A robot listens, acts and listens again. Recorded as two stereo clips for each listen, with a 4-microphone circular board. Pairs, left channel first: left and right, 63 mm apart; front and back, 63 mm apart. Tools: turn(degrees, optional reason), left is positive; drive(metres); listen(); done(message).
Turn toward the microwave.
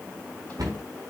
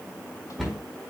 listen()
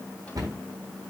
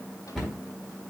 listen()
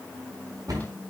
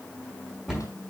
done("I can't make out a microwave to turn to.")